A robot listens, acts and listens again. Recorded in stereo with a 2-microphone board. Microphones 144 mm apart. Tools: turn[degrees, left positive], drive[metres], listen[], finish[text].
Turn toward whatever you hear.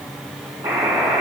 Thought: The buzzer: about 15° right or 165° right.
Action: turn[-15]
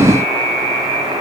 Thought: So it is at 150° right.
Action: turn[-150]
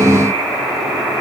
Thought: The buzzer is now 25° right.
Action: turn[-25]
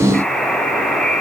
Action: finish[Found it: a buzzer, straight ahead.]